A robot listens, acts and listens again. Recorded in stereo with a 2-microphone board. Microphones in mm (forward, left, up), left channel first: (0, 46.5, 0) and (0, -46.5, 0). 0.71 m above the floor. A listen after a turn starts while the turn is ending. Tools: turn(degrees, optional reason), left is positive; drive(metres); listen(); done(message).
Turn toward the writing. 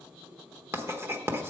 turn(degrees=-25, reason="The writing: about 25° right or 155° right.")
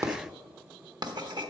turn(degrees=-130, reason="So it is at 130° right.")
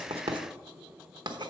turn(degrees=-50, reason="The writing is now 50° right.")
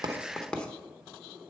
turn(degrees=10, reason="The writing is now 10° left.")
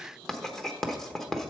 done("Found it: writing, straight ahead, 1 to 2 m away.")